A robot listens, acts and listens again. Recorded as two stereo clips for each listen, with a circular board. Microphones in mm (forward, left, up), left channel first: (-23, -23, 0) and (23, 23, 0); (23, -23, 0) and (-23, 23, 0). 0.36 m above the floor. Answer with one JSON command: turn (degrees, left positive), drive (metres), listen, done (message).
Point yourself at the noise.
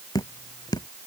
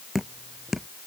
{"turn": -140}
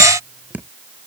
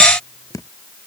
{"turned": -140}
{"turn": -20}
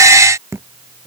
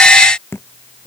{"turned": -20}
{"done": "Facing the dripping."}